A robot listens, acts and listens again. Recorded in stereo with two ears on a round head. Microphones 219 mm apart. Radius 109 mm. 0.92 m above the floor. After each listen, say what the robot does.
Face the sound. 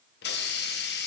Turn 45° left.
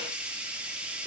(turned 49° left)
Facing the hiss, under 1 m away.